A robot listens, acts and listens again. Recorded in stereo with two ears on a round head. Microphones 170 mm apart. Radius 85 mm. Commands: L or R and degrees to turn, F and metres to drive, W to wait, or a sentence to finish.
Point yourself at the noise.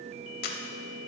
L55
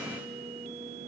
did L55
W
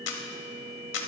L70
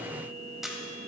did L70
Facing the camera shutter, 1 to 2 m away.